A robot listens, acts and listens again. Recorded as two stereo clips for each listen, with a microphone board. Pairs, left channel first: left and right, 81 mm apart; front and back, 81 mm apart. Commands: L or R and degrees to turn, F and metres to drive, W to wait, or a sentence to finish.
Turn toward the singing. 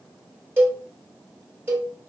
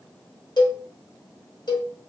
W
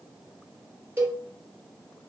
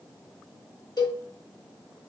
W
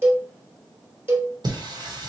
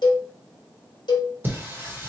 R115
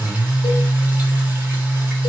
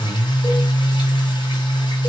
R20
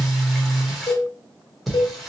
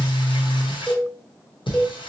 Facing the singing.